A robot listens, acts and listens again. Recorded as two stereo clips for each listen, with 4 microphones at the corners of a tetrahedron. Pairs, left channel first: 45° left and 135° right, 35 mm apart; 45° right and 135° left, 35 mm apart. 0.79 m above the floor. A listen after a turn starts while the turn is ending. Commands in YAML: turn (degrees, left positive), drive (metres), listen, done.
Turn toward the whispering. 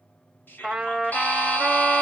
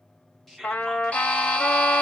turn: 45
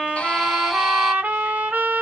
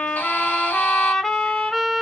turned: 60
turn: -15
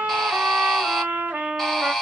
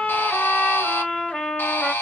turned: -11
listen: true
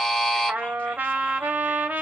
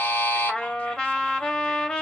done: "I heard whispering from this way, but can't make it out now."